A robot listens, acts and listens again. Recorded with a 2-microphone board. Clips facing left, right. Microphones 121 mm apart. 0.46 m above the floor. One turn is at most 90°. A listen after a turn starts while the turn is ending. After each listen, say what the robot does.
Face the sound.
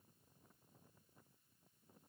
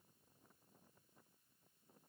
Keep listening.
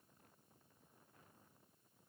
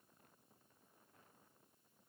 Keep listening.
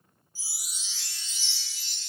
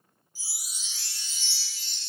Turn 35° left.
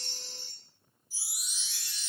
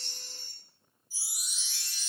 Turn 90° left.
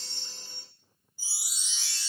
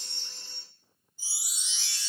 Turn 10° left.
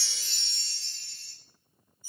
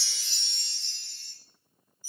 Found it: a chime, straight ahead.